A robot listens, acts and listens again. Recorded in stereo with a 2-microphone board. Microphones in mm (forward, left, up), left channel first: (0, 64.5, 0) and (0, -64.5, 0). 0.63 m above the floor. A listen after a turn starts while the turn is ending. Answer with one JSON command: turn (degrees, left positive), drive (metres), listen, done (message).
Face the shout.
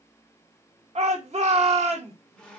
{"turn": -55}
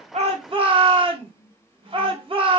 {"turn": -55}
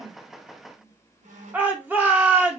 {"turn": -15}
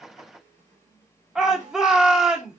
{"done": "Facing the shout."}